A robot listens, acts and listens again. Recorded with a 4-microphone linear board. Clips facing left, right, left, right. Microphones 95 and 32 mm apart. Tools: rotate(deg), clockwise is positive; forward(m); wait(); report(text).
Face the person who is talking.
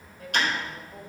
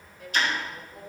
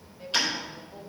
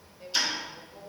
rotate(-40)
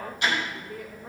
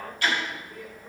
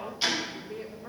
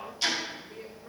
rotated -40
rotate(-100)
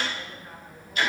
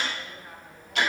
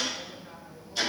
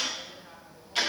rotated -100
rotate(10)
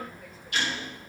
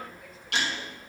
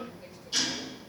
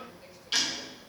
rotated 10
wait()
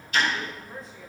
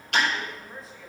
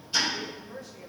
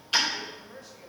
report("Facing the woman speaking.")